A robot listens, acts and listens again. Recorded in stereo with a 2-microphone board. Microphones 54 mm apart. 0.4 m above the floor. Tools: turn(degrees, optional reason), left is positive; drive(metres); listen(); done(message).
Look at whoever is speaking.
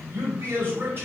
turn(degrees=-45, reason="The man speaking: about 45° right or 135° right.")
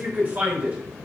turn(degrees=-30, reason="So it is at 30° right.")
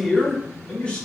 turn(degrees=20, reason="The man speaking is now 20° left.")
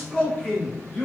turn(degrees=30, reason="The man speaking is now 30° left.")
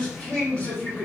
turn(degrees=20, reason="The man speaking is now 20° left.")
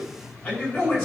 done("Facing the man speaking, 1 to 2 m away.")